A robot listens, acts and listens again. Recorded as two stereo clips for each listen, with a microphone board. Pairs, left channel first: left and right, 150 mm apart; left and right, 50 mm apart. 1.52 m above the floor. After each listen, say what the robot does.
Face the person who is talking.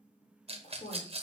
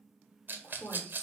Turn 50° left.
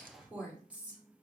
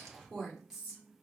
Turn 10° right.
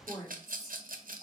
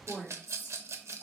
Found it: a woman speaking, straight ahead.